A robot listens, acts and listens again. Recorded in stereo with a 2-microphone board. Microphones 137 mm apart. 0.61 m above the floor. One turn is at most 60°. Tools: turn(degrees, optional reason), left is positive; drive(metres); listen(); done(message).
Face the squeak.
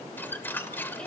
turn(degrees=30)
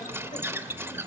turn(degrees=-15, reason="So it is at 15° right.")
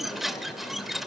done("Found it: a squeak, straight ahead.")